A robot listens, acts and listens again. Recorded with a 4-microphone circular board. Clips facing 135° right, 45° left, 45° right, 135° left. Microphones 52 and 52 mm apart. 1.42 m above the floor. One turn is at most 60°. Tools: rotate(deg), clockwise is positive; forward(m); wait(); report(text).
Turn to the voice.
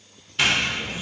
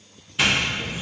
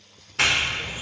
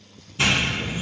rotate(60)
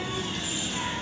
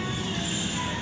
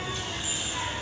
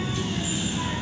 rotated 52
rotate(50)
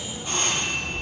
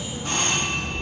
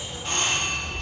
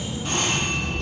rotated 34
rotate(20)
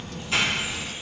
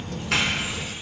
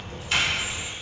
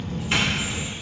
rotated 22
report("Found it: a child speaking, straight ahead, under 1 m away.")